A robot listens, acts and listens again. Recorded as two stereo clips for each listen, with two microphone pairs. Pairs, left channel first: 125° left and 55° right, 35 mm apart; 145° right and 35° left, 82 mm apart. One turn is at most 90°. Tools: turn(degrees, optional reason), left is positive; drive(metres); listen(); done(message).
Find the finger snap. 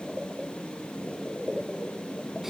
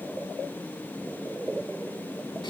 listen()
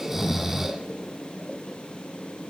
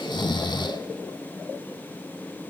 listen()
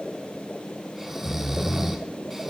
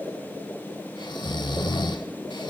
done("I can't make out a finger snap, only snoring.")